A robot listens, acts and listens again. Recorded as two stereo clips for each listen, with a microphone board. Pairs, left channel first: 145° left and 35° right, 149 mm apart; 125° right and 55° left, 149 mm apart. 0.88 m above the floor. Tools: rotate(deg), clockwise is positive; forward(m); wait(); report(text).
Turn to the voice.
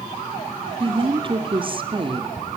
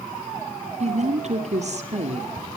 rotate(-20)
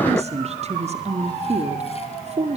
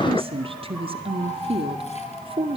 report("Facing the woman speaking, 2 to 4 m away.")